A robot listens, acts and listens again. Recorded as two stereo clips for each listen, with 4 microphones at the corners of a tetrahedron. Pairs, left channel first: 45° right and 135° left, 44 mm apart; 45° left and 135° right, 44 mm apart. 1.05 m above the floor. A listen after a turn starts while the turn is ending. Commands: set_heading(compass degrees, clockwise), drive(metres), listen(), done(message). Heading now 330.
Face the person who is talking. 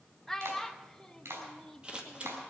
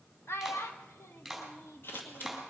set_heading(295)
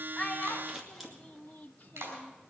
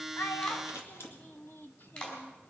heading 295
done("Facing the child speaking.")